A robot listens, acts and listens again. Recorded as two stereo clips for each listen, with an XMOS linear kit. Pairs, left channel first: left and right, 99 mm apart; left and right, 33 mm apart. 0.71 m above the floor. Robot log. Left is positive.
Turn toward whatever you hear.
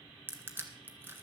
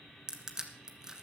note: The crushing: about 20° right or 160° right.
cmd yaw -20
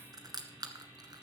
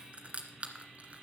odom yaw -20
note: So it is at 140° right.
cmd yaw -140
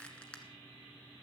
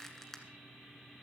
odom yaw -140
note: The crushing is now 10° left.
cmd yaw +10
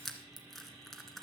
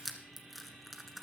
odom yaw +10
end: Facing the crushing, 1 to 2 m away.